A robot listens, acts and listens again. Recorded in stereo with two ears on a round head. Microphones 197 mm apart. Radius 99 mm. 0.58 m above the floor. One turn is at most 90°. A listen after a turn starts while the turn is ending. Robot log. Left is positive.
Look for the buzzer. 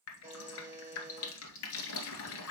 cmd yaw -30
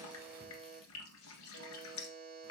note: So it is at 140° right.
cmd yaw -90
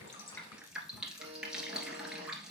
note: Nothing new. It was at 50° right.
cmd yaw -50
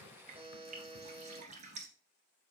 note: The buzzer is now 30° right.
cmd yaw -30
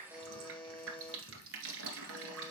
end: Found it: a buzzer, straight ahead, 2 to 4 m away.